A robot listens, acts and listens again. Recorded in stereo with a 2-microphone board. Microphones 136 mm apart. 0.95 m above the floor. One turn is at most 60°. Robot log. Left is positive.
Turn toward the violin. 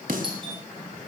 cmd idle
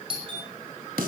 cmd idle
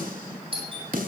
end: I can't make out a violin, only a snare drum and a doorbell.